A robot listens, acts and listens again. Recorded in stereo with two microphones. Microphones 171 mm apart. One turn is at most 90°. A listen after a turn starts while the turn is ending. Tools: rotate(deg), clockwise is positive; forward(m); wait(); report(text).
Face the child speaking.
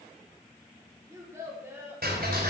rotate(30)
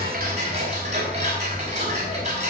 wait()
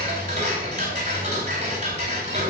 wait()
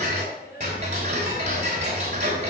rotate(-70)
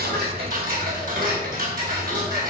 wait()
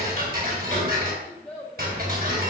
report("Facing the child speaking, 2 to 4 m away.")